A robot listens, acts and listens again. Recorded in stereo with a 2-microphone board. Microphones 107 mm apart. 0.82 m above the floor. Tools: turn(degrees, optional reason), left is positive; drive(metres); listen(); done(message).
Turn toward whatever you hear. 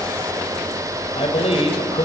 turn(degrees=70, reason="The man speaking: about 70° left or 110° left.")
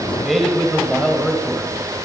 done("Facing the man speaking.")